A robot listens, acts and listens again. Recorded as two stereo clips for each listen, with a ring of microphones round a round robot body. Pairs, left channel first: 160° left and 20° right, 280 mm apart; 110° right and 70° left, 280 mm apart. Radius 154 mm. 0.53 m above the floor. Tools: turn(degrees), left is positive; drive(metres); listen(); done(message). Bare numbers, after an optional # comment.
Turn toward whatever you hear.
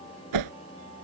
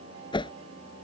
# The whoosh: 40° right.
turn(-40)
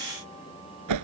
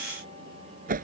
done("Facing the whoosh.")